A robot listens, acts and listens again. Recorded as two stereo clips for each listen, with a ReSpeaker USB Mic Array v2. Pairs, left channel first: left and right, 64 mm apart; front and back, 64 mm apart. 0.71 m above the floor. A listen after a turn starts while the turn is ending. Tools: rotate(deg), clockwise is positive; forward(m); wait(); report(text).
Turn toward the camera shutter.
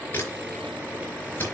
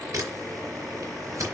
rotate(-150)
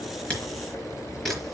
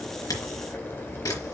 report("Found it: a camera shutter, straight ahead, over 4 m away.")